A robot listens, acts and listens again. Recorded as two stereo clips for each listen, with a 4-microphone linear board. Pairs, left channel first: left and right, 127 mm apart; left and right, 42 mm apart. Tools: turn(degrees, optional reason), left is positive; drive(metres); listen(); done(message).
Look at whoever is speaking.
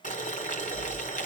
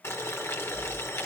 listen()
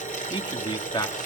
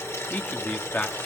turn(degrees=35, reason="The man speaking: about 35° left or 145° left.")
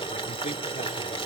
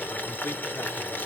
listen()
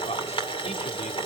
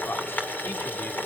turn(degrees=120, reason="So it is at 120° left.")
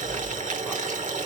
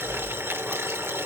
listen()
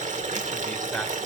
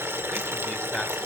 listen()
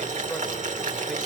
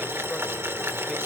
done("I heard a man speaking from this way, but can't make it out now.")